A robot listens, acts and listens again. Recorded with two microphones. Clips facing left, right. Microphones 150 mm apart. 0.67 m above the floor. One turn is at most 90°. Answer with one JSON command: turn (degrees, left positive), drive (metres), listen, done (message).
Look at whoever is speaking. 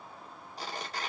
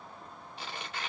{"listen": true}
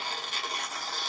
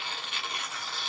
{"listen": true}
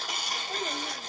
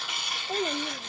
{"turn": -35}
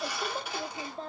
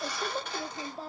{"done": "Found it: a child speaking, straight ahead, under 1 m away."}